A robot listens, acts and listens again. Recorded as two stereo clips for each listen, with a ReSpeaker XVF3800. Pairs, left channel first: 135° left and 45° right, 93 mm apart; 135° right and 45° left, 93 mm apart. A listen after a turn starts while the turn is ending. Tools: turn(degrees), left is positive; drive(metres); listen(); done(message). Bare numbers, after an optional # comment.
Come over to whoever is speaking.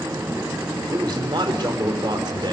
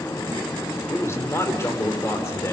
# The man speaking: 75° right.
turn(-75)
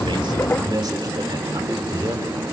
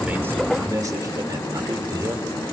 drive(1.0)
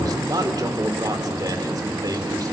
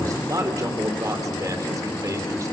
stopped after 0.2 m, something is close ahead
done("Blocked. The man speaking is further on, straight ahead.")